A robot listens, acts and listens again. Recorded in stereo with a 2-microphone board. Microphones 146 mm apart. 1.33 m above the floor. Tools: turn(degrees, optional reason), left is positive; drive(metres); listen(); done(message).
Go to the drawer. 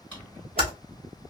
turn(degrees=30)
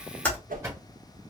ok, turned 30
turn(degrees=-20, reason="So it is at 20° right.")
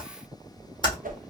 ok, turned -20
listen()
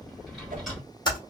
drive(metres=1.0)
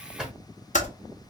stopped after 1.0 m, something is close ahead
done("I am next to the drawer.")